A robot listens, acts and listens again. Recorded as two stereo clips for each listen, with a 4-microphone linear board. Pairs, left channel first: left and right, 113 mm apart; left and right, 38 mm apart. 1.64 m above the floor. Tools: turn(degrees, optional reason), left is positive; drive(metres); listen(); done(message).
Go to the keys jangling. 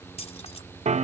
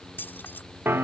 turn(degrees=70, reason="The keys jangling: about 70° left or 110° left.")
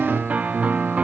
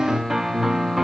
listen()
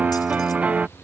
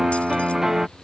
listen()
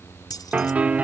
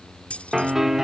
turn(degrees=35, reason="So it is at 35° left.")
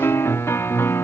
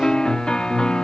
listen()
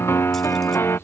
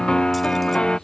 listen()
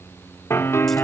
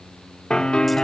done("I heard keys jangling from this way, but can't make it out now. I did not reach it.")